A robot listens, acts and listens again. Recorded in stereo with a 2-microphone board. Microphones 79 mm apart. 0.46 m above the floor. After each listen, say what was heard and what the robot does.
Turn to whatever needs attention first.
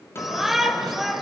Turn 30° right.
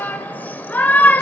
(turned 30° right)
So it is at 25° left. Turn 25° left.
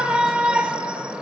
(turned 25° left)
The shout is now 15° right. Turn 15° right.
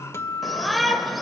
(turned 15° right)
Found it: a shout, straight ahead.